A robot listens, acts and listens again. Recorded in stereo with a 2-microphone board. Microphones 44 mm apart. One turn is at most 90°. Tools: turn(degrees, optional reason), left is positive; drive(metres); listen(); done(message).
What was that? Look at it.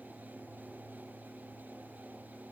listen()
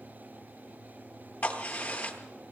turn(degrees=45, reason="The crack: about 45° left or 135° left.")
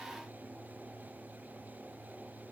listen()
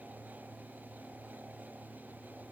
done("I heard a crack, but can't make it out now. It was about straight ahead or 90° left.")